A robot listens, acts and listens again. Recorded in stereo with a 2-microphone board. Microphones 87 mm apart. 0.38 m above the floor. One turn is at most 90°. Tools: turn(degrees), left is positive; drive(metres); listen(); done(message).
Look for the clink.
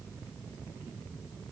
listen()
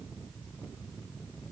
listen()
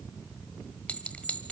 turn(degrees=15)
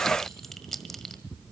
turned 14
done("Facing the clink.")